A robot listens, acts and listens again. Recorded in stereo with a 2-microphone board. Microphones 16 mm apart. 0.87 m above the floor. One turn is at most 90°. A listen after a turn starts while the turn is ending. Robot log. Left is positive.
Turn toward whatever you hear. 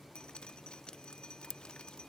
cmd yaw +90
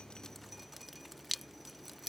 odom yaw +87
end: Found it: dripping, straight ahead.